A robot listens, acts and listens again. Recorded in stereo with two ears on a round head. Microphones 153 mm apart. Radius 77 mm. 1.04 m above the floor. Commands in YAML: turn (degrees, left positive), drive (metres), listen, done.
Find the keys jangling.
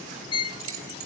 turn: -90
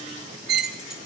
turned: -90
listen: true
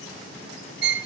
listen: true
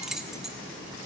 done: "Found it: keys jangling, straight ahead, 1 to 2 m away."